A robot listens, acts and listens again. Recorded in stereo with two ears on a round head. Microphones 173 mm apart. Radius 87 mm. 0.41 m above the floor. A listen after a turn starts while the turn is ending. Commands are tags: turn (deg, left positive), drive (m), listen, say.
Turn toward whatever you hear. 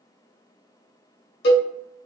<turn deg="60"/>
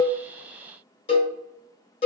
<turn deg="35"/>
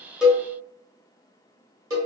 <turn deg="-20"/>
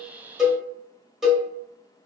<say>Found it: a cowbell, straight ahead.</say>